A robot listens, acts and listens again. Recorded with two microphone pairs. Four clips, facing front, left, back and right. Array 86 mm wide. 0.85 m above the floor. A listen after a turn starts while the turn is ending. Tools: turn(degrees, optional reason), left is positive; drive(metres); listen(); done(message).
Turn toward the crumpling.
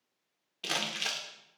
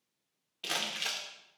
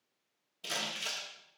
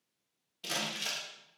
turn(degrees=20, reason="The crumpling: 20° left.")
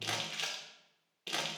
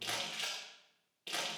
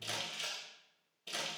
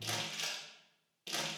turn(degrees=10, reason="The crumpling is now 10° left.")
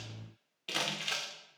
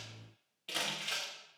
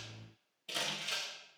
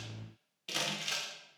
done("Facing the crumpling, 1 to 2 m away.")